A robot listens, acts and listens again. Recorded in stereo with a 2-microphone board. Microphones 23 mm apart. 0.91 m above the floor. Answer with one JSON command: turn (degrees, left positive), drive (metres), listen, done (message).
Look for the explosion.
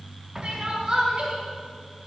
{"turn": -15}
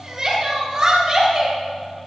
{"listen": true}
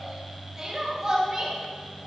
{"done": "I heard an explosion, but can't make it out now. It was about straight ahead or 150° right."}